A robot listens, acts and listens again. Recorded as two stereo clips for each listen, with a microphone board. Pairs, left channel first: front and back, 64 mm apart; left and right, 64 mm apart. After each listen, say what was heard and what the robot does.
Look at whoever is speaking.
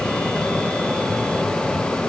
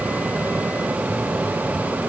Keep listening.
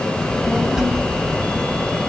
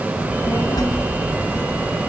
The child speaking: 100° left. Turn 100° left.
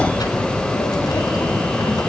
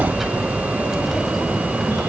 Found it: a child speaking, straight ahead, over 4 m away.